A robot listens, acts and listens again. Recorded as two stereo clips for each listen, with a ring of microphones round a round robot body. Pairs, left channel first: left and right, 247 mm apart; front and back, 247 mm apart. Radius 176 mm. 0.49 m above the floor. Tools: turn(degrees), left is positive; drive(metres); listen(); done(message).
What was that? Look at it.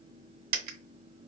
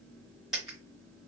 turn(degrees=-90)
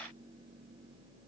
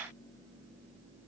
done("I heard a dropped coin from this way, but can't make it out now.")